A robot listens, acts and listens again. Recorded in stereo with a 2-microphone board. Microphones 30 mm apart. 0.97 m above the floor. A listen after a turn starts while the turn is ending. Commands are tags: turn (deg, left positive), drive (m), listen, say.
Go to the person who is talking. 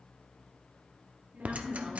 <turn deg="-75"/>
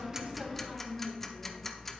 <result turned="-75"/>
<turn deg="-30"/>
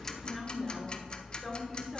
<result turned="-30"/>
<drive m="1.0"/>
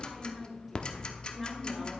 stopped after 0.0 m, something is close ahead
<say>Blocked. The woman speaking is further on, straight ahead.</say>